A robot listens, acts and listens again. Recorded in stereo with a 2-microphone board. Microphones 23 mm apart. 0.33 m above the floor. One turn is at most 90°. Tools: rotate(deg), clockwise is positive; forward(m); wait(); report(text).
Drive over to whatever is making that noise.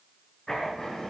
rotate(-25)
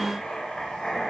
rotate(-90)
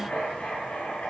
rotate(-90)
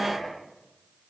rotate(-20)
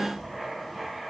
forward(1.0)
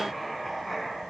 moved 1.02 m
forward(1.0)
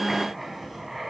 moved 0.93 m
rotate(10)
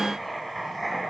forward(1.0)
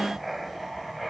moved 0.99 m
forward(1.0)
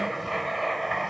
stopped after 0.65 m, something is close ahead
report("I am next to the writing.")